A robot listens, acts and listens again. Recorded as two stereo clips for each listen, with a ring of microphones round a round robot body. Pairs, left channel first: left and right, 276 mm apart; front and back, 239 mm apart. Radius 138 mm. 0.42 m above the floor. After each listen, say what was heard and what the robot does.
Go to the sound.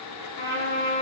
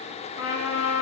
The trumpet: 30° left. Turn 30° left.
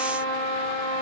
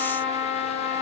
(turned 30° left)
The trumpet is now 15° left. Turn 15° left.
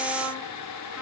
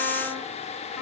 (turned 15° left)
Keep listening.
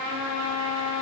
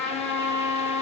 Drive 1.0 m forward.
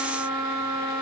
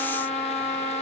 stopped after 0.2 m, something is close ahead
Something is in my way. I am facing the trumpet but have not reached it.